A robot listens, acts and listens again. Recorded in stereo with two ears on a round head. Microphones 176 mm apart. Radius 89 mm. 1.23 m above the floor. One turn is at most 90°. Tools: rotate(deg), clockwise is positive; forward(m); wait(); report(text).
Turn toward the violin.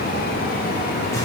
wait()
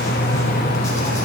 wait()
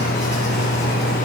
report("I can't make out a violin to turn to.")